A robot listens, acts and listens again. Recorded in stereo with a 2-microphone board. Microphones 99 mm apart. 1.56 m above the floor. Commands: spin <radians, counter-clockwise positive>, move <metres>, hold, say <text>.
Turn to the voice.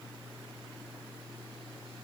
hold
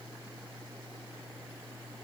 hold
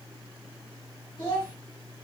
spin 0.96
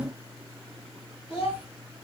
spin 1.13
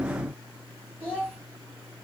spin -0.17
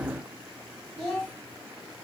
say Facing the child speaking.